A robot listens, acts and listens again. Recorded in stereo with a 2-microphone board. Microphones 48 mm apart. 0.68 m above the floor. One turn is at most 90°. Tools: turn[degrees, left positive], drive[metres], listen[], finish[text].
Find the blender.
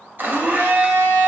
Thought: The blender: about 40° right or 140° right.
Action: turn[-40]
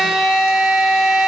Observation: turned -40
Action: finish[Found it: a blender, straight ahead.]